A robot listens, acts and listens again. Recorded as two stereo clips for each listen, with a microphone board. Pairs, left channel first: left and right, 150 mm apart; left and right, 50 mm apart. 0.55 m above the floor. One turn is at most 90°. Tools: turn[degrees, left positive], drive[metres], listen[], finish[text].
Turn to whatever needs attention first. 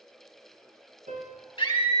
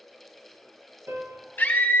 Thought: The scream: about 35° left or 145° left.
Action: turn[35]
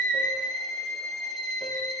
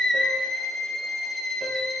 Action: finish[Facing the scream.]